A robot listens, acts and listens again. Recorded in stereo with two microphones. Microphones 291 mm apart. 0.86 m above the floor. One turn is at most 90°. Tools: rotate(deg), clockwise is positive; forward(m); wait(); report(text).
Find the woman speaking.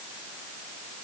wait()
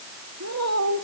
rotate(65)
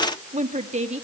rotate(25)
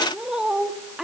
report("Facing the woman speaking, 1 to 2 m away.")